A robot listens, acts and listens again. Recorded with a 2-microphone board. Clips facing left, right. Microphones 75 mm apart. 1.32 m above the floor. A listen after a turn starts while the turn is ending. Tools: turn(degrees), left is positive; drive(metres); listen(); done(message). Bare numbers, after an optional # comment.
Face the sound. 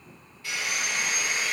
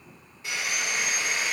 # The sawing: about 20° right or 160° right.
turn(-20)
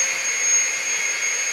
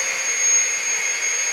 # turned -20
done("Facing the sawing, 1 to 2 m away.")